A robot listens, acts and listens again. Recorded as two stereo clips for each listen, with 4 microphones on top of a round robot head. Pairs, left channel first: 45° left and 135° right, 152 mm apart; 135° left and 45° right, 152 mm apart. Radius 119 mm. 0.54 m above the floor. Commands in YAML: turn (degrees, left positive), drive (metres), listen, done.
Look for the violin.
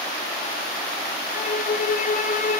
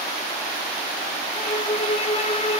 turn: 80
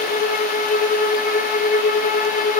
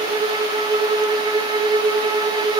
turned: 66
turn: 15
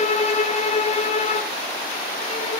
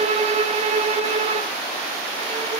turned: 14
done: "Found it: a violin, straight ahead, 2 to 4 m away."